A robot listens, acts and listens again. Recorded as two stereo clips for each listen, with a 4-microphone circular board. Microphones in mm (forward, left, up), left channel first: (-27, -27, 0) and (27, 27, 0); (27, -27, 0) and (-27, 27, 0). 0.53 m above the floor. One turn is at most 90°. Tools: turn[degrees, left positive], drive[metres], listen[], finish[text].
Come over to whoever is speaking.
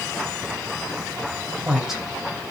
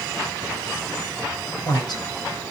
Thought: The woman speaking: 40° right.
Action: turn[-40]
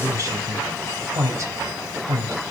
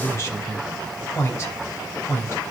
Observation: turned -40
Action: drive[1.0]
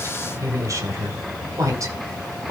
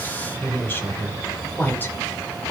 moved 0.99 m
Thought: The woman speaking is now 10° left.
Action: turn[10]
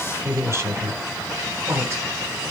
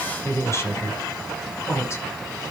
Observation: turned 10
Action: drive[1.0]
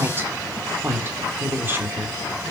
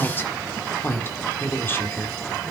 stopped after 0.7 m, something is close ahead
Action: finish[Arrived at the woman speaking, straight ahead.]